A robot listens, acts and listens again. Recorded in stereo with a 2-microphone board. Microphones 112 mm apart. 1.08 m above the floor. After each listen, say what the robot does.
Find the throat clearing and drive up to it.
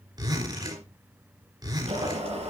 Keep listening.
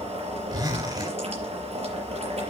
Keep listening.
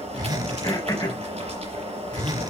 Turn 35° left.
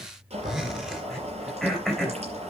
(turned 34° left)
Drive 1.0 m forward.
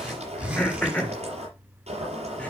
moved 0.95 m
Turn 15° left.
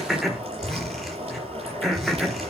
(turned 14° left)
Drive 1.0 m forward.
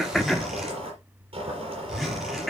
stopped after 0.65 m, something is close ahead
I am next to the throat clearing.